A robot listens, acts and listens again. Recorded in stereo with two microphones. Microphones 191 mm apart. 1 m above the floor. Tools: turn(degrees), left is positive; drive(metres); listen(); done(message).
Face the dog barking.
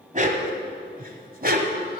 turn(degrees=-50)
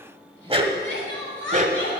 turn(degrees=-40)
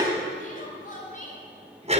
turn(degrees=-35)
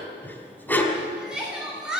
turn(degrees=10)
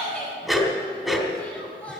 done("Found it: a dog barking, straight ahead, 2 to 4 m away.")